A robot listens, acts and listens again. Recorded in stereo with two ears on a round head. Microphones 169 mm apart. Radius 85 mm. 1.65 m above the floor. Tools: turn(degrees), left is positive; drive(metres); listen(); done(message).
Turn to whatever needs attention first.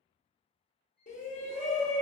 turn(degrees=40)
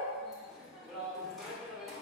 done("Found it: a shout, straight ahead.")